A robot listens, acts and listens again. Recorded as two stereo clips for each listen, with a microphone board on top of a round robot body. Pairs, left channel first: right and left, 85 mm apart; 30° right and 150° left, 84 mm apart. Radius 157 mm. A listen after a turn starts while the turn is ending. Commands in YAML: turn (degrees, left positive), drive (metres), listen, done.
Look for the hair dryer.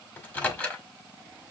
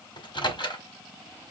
listen: true
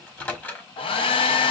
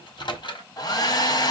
turn: -75
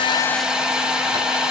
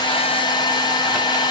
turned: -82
turn: 10
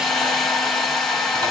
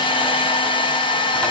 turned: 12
done: "Found it: a hair dryer, straight ahead, under 1 m away."